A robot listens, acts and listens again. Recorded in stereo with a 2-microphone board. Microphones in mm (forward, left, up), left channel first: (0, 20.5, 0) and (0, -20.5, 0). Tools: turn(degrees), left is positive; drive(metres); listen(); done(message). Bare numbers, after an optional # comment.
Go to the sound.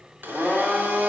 # The blender: about 65° right or 115° right.
turn(-65)
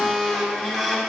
drive(1.0)
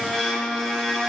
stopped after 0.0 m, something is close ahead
# The blender is now 10° left.
turn(10)
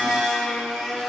done("Blocked. The blender is further on, straight ahead.")